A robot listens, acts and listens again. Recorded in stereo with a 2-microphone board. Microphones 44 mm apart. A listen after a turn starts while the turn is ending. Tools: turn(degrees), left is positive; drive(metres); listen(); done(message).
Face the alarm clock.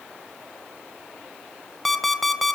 turn(degrees=30)
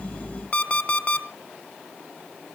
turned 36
turn(degrees=140)
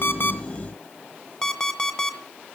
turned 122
turn(degrees=20)
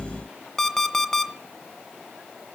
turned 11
turn(degrees=10)
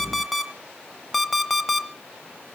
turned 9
done("Found it: an alarm clock, straight ahead.")